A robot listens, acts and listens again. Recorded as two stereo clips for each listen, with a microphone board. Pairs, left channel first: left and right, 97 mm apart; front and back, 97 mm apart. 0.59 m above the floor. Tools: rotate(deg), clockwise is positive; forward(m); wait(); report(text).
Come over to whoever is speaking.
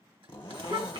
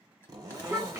rotate(110)
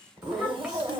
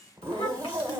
forward(1.0)
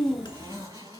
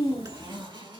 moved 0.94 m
forward(1.0)
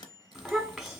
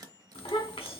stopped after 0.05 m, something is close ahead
report("Arrived at the child speaking, straight ahead.")